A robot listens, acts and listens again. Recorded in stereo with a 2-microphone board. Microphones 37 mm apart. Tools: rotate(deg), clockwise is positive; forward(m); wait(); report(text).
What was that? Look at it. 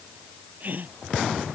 rotate(50)
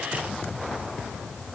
wait()
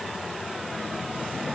report("I heard a gasp, but can't make it out now. It was about straight ahead or 80° right.")